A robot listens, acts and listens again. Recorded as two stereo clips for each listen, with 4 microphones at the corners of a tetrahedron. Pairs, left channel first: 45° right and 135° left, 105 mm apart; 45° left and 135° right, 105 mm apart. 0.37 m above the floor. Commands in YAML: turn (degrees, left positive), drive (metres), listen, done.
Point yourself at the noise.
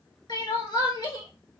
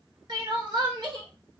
turn: -90
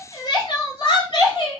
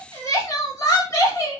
turn: -10
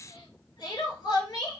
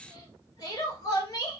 done: "Found it: crying, straight ahead, 1 to 2 m away."